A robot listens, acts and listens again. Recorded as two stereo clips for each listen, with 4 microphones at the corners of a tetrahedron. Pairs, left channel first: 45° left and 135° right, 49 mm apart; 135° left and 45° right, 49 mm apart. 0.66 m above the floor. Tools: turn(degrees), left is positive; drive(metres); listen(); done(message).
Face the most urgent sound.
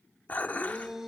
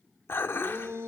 turn(degrees=-50)
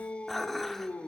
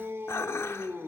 turn(degrees=-15)
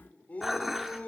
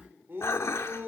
turn(degrees=-10)
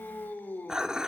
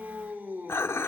done("Facing the shout, 2 to 4 m away.")